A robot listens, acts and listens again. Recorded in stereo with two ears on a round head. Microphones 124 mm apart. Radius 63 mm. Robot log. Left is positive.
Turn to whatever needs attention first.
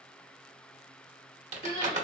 note: The crying: about 40° left or 140° left.
cmd yaw +40
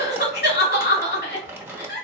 note: So it is at 95° left.
cmd yaw +95
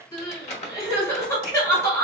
note: The crying is now 20° left.
cmd yaw +20
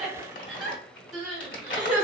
end: Found it: crying, straight ahead, 1 to 2 m away.